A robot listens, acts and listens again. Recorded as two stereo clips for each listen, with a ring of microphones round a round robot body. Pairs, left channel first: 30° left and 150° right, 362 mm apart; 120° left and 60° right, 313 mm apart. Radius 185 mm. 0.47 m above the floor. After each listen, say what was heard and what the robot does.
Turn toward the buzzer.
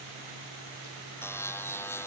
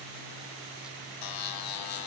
The buzzer: 115° left. Turn 115° left.
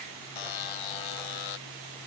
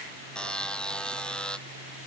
The buzzer is now 35° left. Turn 35° left.
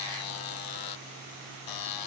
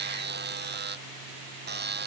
Found it: a buzzer, straight ahead.